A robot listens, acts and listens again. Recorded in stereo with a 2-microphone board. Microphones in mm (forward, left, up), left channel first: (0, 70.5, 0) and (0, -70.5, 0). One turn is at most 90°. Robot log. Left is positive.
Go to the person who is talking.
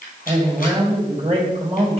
note: The man speaking: about 50° right or 130° right.
cmd yaw -50
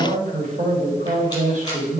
note: So it is at 80° right.
cmd yaw -80
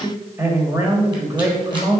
note: The man speaking is now 20° right.
cmd yaw -20
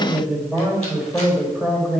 cmd fwd 1.0
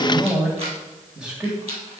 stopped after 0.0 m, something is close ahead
end: Blocked. The man speaking is further on, straight ahead.